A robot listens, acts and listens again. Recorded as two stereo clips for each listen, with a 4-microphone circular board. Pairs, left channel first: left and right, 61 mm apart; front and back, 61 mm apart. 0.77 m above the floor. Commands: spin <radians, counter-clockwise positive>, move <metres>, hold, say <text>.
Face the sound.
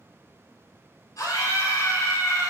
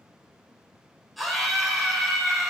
spin 1.57
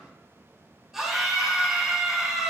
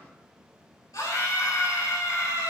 say Facing the scream, 2 to 4 m away.